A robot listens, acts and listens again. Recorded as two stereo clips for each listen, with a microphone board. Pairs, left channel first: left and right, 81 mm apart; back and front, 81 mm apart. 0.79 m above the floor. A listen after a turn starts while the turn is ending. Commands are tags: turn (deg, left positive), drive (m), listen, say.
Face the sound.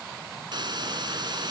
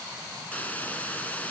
<turn deg="-110"/>
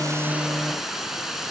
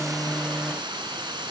<say>Facing the hiss, 2 to 4 m away.</say>